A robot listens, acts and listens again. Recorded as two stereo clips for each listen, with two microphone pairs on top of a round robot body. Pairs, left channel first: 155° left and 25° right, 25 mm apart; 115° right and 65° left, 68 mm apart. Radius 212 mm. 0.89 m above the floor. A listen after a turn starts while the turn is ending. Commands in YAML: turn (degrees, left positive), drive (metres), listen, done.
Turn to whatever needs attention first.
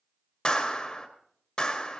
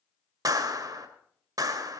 listen: true
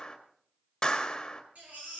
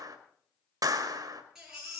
turn: -15
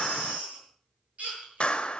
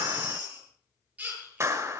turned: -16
done: "Facing the baby crying."